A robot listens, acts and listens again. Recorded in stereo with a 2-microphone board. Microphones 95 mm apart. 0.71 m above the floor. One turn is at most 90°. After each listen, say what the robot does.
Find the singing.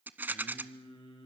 Turn 65° left.
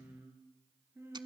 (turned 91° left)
Turn 25° right.
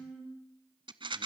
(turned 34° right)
Turn 10° left.
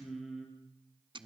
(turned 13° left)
Facing the singing, over 4 m away.